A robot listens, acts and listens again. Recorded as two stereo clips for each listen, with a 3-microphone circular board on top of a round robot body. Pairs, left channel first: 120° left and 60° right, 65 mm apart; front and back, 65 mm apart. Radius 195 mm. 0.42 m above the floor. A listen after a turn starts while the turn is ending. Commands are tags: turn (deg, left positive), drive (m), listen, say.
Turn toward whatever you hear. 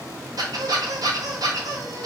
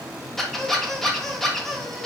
<turn deg="-85"/>
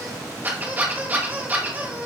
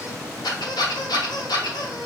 <say>Found it: a squeak, straight ahead.</say>